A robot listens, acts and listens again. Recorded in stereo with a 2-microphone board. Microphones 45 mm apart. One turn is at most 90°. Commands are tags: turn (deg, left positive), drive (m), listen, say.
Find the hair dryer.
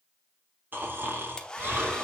<turn deg="15"/>
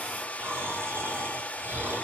<turn deg="90"/>
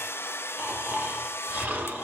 <turn deg="85"/>
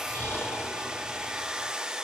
<turn deg="-15"/>
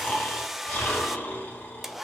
<say>Facing the hair dryer, under 1 m away.</say>